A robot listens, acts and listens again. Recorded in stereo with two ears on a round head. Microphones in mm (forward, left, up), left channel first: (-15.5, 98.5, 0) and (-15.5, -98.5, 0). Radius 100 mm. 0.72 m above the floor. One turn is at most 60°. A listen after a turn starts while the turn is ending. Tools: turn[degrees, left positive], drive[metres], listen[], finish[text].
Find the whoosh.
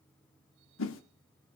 Thought: The whoosh: about 65° left or 115° left.
Action: turn[60]
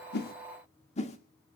Thought: So it is at 35° left.
Action: turn[35]
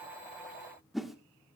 Action: finish[Found it: a whoosh, straight ahead, 1 to 2 m away.]